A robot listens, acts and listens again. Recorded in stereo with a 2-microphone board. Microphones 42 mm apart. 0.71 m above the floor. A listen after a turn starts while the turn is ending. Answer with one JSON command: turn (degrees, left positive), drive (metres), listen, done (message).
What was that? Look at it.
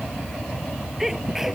{"turn": -30}
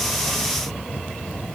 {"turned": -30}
{"listen": true}
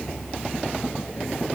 {"done": "I heard a sneeze, but can't make it out now. It was about 20° left or 140° right."}